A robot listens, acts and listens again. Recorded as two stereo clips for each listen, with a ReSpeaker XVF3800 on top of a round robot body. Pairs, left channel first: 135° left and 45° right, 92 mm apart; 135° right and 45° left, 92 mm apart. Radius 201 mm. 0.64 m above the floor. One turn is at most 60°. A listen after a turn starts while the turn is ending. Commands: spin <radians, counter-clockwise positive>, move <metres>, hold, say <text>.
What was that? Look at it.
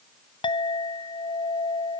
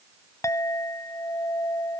spin 1.05
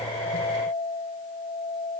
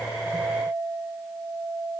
spin 1.05
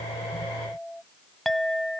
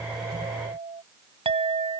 spin 0.79
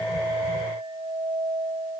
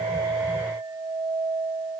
spin -0.17
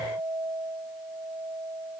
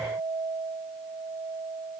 say Found it: a clink, straight ahead.